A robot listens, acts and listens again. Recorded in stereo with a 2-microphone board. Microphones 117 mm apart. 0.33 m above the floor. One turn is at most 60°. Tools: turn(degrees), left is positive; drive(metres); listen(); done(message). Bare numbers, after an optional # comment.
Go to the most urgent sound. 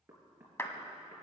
listen()
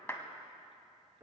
listen()
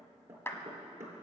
done("I can't make out anything urgent, only a clap and knocking.")